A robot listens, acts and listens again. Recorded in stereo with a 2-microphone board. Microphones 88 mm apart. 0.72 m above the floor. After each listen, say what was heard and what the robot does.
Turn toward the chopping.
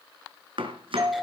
Turn 90° right.
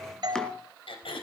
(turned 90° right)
Keep listening.
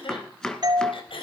Found it: chopping, straight ahead, 2 to 4 m away.